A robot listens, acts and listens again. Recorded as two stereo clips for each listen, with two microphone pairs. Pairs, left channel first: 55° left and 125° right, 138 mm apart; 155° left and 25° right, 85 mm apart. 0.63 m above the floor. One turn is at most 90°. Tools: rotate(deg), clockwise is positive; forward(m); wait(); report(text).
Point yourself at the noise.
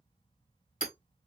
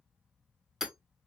rotate(-60)
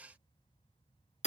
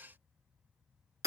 rotate(-30)
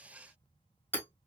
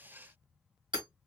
rotate(15)
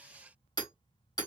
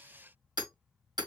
report("Facing the hammering.")